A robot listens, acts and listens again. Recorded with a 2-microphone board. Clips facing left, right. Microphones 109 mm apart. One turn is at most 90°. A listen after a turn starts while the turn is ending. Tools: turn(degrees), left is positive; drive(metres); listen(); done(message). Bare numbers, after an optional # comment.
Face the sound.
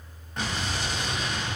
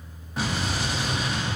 turn(-30)
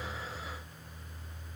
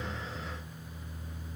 listen()
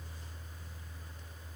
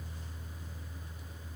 done("I heard an explosion, but can't make it out now. It was about 25° left or 145° right.")